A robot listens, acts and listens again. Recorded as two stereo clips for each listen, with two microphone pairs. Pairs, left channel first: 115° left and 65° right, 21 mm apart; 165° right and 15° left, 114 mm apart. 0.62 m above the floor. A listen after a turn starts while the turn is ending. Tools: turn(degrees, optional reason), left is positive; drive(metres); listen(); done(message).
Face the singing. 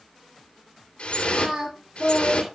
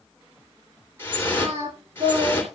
turn(degrees=-10, reason="The singing: 10° right.")
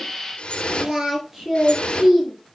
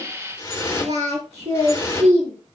turn(degrees=10, reason="The singing is now 10° left.")
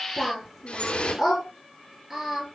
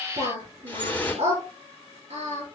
turn(degrees=10, reason="The singing is now 10° left.")
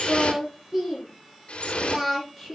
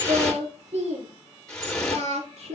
done("Found it: singing, straight ahead.")